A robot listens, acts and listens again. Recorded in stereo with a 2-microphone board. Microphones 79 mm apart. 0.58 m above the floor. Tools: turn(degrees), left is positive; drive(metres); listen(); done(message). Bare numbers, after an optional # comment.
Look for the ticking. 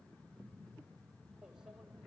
listen()
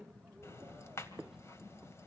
# The ticking: about 35° left or 145° left.
turn(35)
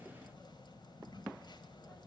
# So it is at 110° left.
turn(110)
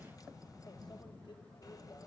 # The ticking is now 50° left.
turn(50)
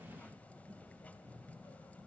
# The ticking is now 15° left.
turn(15)
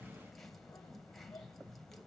done("Facing the ticking, 2 to 4 m away.")